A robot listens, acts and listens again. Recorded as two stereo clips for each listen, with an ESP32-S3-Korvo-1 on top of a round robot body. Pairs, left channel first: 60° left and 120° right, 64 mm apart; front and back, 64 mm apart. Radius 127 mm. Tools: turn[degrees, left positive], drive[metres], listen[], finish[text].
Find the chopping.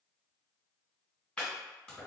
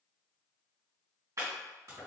Thought: The chopping: 135° left.
Action: turn[135]
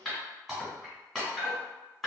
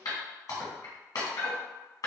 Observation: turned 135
Thought: The chopping is now 35° right.
Action: turn[-35]
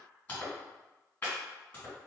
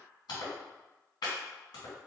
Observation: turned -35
Thought: The chopping is now 10° right.
Action: turn[-10]
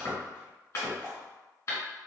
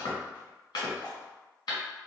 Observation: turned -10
Action: finish[Facing the chopping, 1 to 2 m away.]